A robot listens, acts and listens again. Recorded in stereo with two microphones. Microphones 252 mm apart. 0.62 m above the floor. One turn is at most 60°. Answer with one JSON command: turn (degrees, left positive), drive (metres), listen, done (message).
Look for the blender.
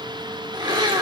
{"turn": -15}
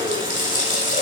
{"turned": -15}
{"listen": true}
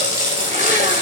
{"listen": true}
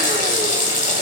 {"done": "I heard a blender, but can't make it out now. It was about straight ahead or 150° right."}